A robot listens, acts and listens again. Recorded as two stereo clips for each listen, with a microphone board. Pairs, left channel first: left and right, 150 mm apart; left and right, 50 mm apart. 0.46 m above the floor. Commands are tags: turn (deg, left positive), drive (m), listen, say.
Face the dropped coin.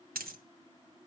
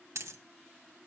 <turn deg="-90"/>
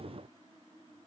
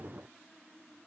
<say>Facing where the dropped coin came from. I can't hear it now.</say>